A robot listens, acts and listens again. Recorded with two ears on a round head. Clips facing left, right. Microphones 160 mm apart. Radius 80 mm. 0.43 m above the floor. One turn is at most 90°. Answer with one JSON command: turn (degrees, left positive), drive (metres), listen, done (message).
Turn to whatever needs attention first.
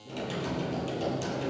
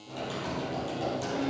{"listen": true}
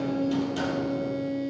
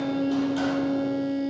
{"listen": true}
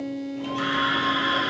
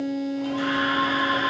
{"turn": 60}
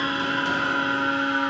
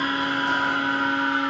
{"turn": 40}
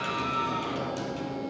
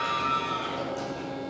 {"done": "Found it: a scream, straight ahead, 2 to 4 m away."}